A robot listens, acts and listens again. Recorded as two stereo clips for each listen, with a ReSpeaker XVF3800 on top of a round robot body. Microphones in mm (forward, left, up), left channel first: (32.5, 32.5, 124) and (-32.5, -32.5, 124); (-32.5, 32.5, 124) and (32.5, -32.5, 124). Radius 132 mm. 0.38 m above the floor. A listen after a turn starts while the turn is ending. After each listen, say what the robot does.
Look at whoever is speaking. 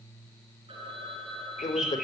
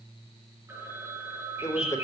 Turn 85° left.
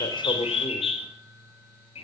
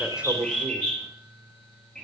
Keep listening.
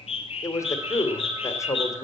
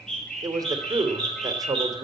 Facing the man speaking.